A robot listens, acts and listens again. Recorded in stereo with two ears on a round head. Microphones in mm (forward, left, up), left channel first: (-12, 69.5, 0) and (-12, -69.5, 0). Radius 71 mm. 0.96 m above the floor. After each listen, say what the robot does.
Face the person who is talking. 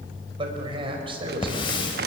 Turn 35° right.
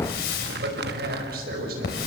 Turn 110° right.
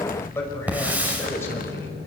Turn 15° left.
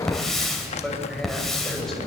Keep listening.
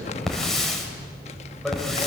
Keep listening.
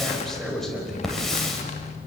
Found it: a man speaking, straight ahead, over 4 m away.